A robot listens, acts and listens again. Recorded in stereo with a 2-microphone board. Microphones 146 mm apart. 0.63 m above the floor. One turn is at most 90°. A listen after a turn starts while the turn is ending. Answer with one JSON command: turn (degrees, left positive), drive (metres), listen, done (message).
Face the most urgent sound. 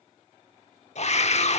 {"turn": 50}
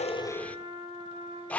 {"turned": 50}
{"turn": 10}
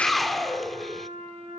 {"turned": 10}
{"done": "Facing the scream, 1 to 2 m away."}